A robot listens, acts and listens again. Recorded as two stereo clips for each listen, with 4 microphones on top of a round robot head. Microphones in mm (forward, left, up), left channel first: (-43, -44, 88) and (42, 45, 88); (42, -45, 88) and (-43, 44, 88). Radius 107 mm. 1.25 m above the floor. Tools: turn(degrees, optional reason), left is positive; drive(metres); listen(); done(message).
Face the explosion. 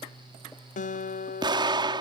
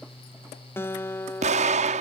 turn(degrees=100, reason="The explosion: 100° left.")
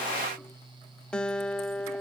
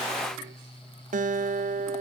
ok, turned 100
done("Facing where the explosion came from. I can't hear it now.")